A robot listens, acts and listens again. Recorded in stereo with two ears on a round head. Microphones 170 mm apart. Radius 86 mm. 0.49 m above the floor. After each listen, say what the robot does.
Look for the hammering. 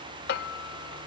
Turn 55° left.
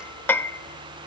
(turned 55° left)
Turn 10° left.
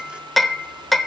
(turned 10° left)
Found it: hammering, straight ahead, 1 to 2 m away.